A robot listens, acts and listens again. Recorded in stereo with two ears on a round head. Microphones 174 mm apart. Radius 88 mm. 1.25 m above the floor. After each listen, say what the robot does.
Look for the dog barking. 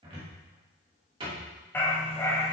Turn 15° left.
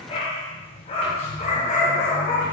Turn 40° left.
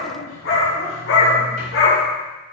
Turn 105° left.
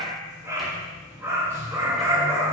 Turn 15° right.
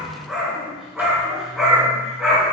Found it: a dog barking, straight ahead.